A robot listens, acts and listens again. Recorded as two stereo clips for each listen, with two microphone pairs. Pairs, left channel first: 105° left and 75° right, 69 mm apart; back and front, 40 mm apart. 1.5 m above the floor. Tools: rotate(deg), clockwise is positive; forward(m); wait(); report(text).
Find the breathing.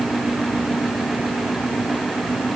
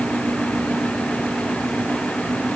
wait()
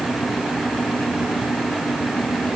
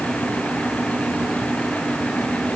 wait()
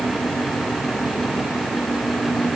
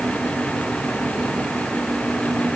report("I can't make out breathing.")